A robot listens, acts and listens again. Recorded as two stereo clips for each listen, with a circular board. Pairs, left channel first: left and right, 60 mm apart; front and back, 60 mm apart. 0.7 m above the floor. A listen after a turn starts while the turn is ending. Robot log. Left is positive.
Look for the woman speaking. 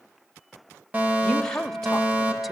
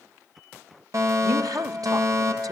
note: The woman speaking: 170° left.
cmd yaw +170
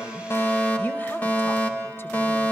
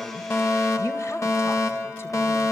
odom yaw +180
note: Nothing new. It was at 10° right.
cmd yaw -10
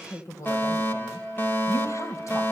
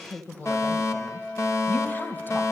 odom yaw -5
note: The woman speaking is now 55° left.
cmd yaw +55
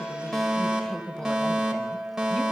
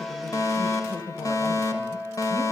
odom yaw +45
note: The woman speaking is now 10° left.
cmd yaw +10
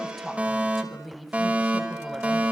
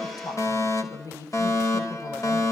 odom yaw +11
end: Facing the woman speaking.